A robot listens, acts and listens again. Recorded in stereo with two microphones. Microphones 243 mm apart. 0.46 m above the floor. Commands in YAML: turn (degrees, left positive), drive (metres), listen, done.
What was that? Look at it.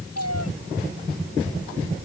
turn: 90
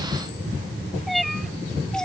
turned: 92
done: "Found it: a cat meowing, straight ahead."